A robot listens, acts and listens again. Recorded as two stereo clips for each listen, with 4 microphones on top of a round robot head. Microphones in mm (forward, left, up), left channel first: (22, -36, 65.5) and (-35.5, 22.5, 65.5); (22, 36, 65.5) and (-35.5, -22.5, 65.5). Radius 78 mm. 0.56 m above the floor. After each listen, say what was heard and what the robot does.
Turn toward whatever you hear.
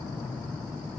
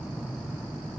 Keep listening.
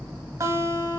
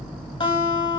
The guitar: 75° left. Turn 75° left.
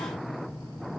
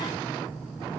Keep listening.
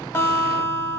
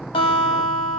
The guitar is now 15° left. Turn 15° left.
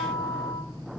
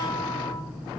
Facing the guitar, under 1 m away.